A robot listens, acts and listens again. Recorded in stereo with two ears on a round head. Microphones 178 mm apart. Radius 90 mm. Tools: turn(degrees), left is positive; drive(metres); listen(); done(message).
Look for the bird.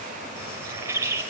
turn(degrees=-30)
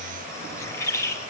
turn(degrees=15)
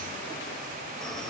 listen()
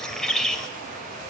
done("Found it: a bird, straight ahead.")